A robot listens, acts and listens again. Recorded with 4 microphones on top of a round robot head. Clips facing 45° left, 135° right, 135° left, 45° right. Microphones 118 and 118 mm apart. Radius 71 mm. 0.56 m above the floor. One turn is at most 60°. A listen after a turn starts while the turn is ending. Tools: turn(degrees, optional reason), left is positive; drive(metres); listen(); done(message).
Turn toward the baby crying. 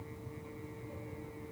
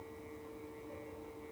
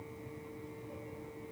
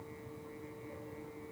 listen()
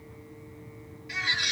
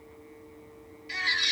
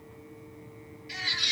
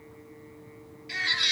turn(degrees=-60, reason="The baby crying: 75° right.")
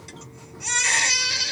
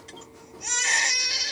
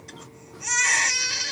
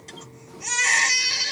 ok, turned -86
turn(degrees=15, reason="The baby crying is now 15° left.")
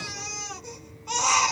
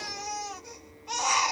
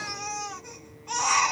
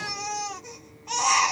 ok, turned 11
done("Found it: a baby crying, straight ahead, 1 to 2 m away.")